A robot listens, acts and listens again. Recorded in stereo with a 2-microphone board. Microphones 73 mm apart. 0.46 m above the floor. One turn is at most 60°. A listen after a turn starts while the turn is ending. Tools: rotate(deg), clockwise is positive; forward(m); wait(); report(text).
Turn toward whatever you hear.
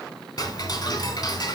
rotate(-60)
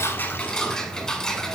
rotate(-10)
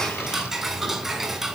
report("Facing the ticking, 1 to 2 m away.")